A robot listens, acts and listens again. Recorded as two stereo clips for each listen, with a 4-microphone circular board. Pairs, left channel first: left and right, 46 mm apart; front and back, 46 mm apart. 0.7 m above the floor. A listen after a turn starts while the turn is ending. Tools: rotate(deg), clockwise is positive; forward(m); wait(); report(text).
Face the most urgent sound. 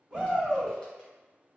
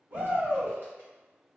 rotate(160)
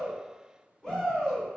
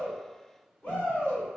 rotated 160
rotate(-15)
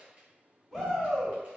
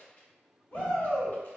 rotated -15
report("Found it: a shout, straight ahead.")